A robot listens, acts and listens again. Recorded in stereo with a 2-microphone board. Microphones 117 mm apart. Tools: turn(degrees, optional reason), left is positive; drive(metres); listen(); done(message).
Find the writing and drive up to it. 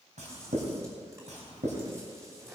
turn(degrees=-90)
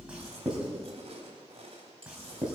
drive(metres=1.0)
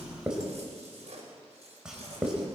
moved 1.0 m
drive(metres=1.0)
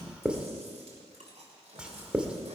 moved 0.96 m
turn(degrees=-10, reason="The writing is now 10° right.")
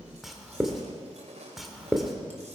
drive(metres=1.0)
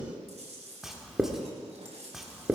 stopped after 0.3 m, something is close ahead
done("I am next to the writing.")